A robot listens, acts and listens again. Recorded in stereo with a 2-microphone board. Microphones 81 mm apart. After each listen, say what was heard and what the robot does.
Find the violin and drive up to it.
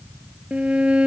Turn 30° right.
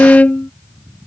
So it is at 20° left. Turn 20° left.
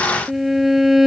Drive 1.0 m forward.
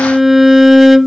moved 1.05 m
Drive 1.0 m forward.
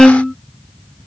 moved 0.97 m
Drive 1.0 m forward.
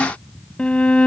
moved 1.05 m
The violin is now 20° left. Turn 20° left.
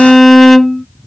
Drive 1.0 m forward.
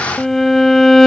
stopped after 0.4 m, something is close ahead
I am next to the violin.